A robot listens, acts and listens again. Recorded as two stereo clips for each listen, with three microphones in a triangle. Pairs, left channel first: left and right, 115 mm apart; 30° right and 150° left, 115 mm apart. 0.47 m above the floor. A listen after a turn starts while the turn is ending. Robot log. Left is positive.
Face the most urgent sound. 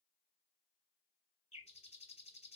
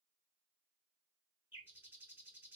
cmd idle
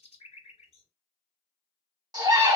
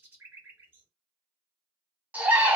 note: The scream: 135° right.
cmd yaw -135
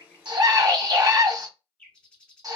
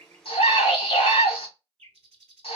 note: The scream is now 40° right.
cmd yaw -40
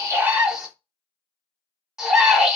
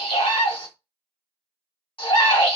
end: Found it: a scream, straight ahead, 1 to 2 m away.